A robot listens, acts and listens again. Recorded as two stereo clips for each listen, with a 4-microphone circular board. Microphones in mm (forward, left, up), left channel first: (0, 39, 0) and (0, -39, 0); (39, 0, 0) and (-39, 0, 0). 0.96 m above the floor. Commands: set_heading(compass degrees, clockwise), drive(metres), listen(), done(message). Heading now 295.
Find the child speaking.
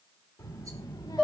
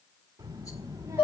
set_heading(165)
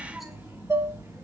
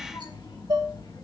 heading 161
set_heading(191)
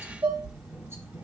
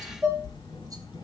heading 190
set_heading(205)
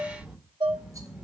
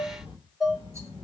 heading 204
done("Facing the child speaking, 2 to 4 m away.")